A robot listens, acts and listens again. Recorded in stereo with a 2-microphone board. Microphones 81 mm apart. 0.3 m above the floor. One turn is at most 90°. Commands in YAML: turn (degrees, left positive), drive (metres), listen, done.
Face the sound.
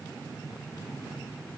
listen: true
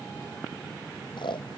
turn: 75
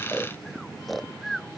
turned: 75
done: "Found it: snoring, straight ahead."